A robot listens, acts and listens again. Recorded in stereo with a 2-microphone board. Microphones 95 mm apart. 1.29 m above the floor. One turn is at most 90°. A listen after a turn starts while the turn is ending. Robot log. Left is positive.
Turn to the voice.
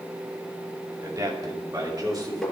note: The man speaking: about 40° right or 140° right.
cmd yaw -40
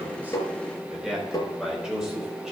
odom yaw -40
end: Found it: a man speaking, straight ahead.